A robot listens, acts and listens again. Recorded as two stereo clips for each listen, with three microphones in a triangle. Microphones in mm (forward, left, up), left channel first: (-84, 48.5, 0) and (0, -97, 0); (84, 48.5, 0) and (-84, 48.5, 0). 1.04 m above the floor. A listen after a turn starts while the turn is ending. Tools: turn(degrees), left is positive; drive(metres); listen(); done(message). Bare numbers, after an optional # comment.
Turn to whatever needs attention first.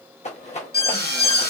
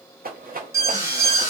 # The alarm: 105° left.
turn(105)
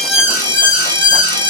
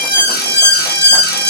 done("Facing the alarm, 1 to 2 m away.")